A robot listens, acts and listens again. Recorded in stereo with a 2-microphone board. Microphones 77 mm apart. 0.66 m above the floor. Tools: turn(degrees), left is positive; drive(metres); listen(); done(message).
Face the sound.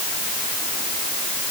listen()
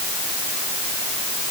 listen()
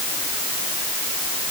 done("I can't make out anything to turn to.")